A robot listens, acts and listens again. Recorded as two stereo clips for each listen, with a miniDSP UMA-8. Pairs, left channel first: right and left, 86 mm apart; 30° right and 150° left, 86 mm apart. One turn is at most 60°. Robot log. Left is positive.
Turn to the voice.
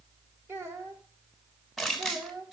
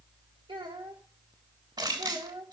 note: The child speaking: 150° left.
cmd yaw +60
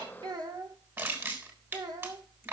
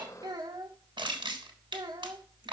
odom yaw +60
note: The child speaking is now 120° left.
cmd yaw +60
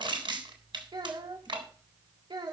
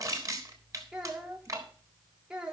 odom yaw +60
note: The child speaking is now 70° left.
cmd yaw +60
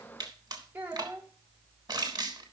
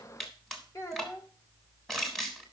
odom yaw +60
note: The child speaking is now 25° left.
cmd yaw +25
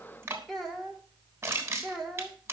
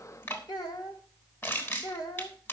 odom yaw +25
end: Found it: a child speaking, straight ahead, 2 to 4 m away.